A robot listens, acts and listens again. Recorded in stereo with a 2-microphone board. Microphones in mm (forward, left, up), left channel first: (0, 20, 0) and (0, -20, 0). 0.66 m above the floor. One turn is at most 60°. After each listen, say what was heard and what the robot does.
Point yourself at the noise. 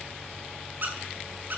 The squeak: about 50° right or 130° right. Turn 50° right.
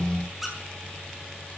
Facing the squeak, over 4 m away.